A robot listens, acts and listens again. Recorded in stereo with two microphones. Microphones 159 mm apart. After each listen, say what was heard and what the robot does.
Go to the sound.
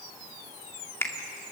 The finger snap: about 15° left or 165° left. Turn 15° left.
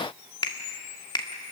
So it is at 150° left. Turn 150° left.
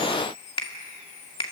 The finger snap is now 35° left. Turn 35° left.
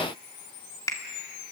The finger snap is now 20° left. Turn 20° left.
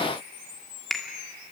Drive 1.0 m forward.
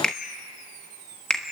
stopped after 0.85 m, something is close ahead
I am next to the finger snap.